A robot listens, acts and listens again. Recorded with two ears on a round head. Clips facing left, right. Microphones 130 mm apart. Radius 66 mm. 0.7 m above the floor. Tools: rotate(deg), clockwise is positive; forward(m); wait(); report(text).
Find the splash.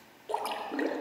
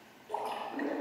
rotate(-70)
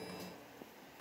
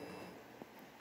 wait()
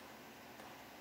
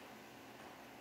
report("I heard a splash, but can't make it out now. It was about straight ahead or 40° left.")